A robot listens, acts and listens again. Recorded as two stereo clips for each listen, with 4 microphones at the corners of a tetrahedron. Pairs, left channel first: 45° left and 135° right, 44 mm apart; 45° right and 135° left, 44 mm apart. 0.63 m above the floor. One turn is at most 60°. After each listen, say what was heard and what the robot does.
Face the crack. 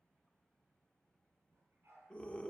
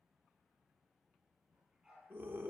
Keep listening.
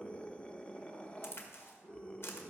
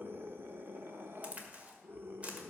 The crack: 75° left. Turn 60° left.
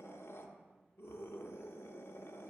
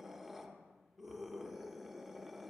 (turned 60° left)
Nothing new. It was at 15° left. Turn 15° left.
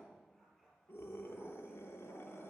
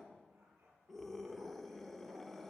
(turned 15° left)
I heard a crack from this way, but can't make it out now.